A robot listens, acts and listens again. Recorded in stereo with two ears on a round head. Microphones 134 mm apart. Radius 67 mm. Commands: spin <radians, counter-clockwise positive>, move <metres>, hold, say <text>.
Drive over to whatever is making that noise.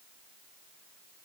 hold
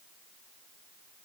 hold
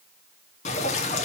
spin 0.87
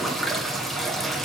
move 1.0
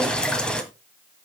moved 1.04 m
move 1.0
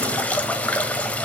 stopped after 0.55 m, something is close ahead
spin 0.17
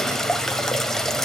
say Arrived at the dripping, straight ahead.